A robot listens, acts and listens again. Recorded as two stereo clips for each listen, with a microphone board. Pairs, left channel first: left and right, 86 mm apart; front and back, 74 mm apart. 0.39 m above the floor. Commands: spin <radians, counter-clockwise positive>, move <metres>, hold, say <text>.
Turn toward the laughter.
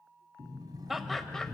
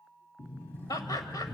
say Facing the laughter.